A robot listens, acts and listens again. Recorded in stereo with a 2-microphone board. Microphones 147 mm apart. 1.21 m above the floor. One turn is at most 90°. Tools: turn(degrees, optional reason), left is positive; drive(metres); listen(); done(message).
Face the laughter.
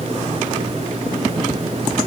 listen()
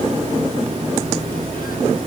listen()
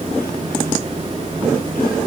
done("I can't make out laughter.")